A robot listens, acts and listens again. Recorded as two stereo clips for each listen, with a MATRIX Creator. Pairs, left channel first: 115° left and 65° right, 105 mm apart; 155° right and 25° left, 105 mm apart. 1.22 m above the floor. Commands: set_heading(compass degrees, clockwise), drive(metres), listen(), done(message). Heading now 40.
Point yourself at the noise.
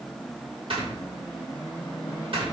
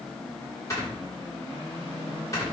set_heading(140)
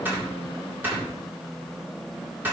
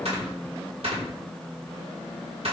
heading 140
done("Facing the snoring, 2 to 4 m away.")